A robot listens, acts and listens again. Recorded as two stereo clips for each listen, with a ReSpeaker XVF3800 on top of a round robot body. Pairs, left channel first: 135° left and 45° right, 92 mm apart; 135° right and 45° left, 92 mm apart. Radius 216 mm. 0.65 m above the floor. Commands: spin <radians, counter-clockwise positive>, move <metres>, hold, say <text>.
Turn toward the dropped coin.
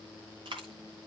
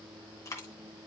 spin -1.40
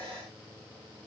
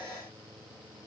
say Facing where the dropped coin came from. I can't hear it now.